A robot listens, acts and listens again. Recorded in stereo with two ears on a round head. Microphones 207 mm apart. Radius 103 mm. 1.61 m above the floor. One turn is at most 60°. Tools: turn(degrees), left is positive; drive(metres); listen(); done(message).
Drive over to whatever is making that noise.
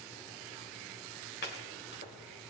turn(degrees=45)
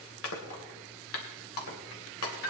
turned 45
turn(degrees=60)
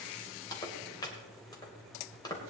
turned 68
turn(degrees=20)
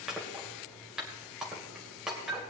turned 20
drive(metres=1.0)
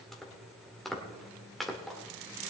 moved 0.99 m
drive(metres=1.0)
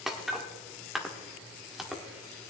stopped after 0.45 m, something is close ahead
done("I am next to the chopping.")